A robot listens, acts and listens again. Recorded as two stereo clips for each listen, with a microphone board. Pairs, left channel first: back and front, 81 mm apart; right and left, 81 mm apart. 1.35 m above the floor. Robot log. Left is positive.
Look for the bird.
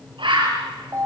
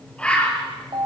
note: The bird: 15° right.
cmd yaw -15
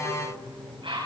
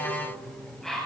end: Found it: a bird, straight ahead, over 4 m away.